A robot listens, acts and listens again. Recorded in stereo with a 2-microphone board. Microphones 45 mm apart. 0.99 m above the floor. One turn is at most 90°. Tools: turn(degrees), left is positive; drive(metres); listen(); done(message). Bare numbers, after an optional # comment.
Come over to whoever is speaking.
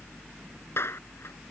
listen()
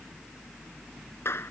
listen()
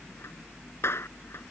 done("I can't make out anyone speaking, only a clap.")